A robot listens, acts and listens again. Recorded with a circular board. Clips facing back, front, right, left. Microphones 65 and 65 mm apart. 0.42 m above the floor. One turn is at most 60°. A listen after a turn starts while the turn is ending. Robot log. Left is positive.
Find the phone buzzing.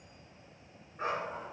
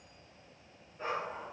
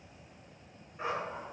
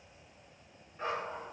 cmd idle
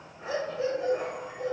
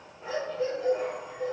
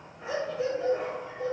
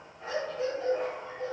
cmd idle
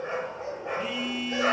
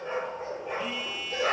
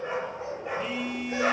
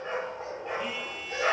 note: The phone buzzing: 130° right.
cmd yaw -60
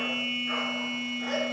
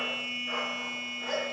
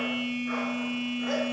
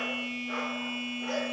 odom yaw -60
note: The phone buzzing is now 70° right.
cmd yaw -60
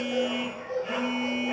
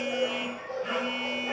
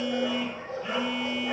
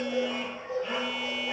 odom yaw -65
note: The phone buzzing is now 10° right.
cmd yaw -10
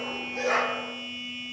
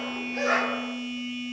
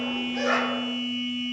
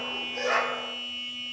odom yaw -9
end: Found it: a phone buzzing, straight ahead.